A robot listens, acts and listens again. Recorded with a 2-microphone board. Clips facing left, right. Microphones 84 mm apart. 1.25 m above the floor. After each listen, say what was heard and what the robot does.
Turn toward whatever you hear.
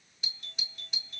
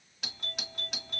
The doorbell: about 75° right or 105° right. Turn 75° right.
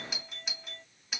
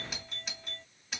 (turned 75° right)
Facing the doorbell.